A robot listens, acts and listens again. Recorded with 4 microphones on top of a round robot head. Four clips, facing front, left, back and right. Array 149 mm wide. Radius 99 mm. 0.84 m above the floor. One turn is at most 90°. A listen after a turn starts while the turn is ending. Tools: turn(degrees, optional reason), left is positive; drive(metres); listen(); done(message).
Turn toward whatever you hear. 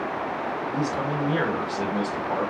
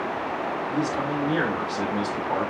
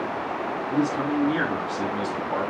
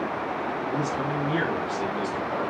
turn(degrees=45, reason="The man speaking: 45° left.")
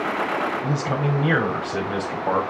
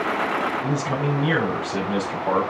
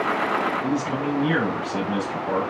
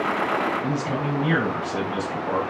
turn(degrees=15, reason="The man speaking is now 15° left.")
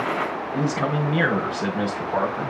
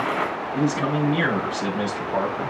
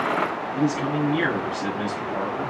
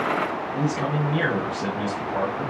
turn(degrees=15, reason="The man speaking is now 15° left.")
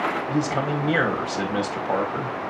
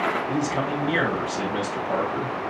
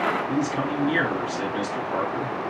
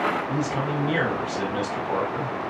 done("Facing the man speaking, over 4 m away.")